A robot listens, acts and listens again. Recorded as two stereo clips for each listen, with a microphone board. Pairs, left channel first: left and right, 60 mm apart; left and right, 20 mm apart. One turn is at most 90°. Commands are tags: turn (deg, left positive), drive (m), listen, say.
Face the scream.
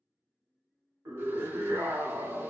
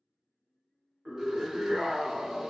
<turn deg="-55"/>
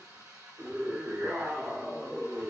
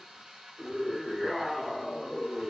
<turn deg="-25"/>
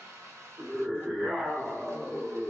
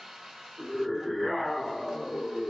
<say>Found it: a scream, straight ahead.</say>